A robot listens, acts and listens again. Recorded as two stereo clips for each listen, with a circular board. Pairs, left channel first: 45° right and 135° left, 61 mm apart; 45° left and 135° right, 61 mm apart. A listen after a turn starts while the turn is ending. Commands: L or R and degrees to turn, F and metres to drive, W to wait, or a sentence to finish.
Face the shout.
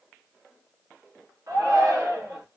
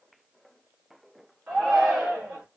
L150
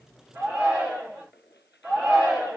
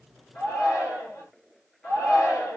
L70
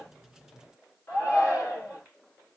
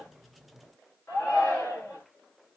Found it: a shout, straight ahead, 2 to 4 m away.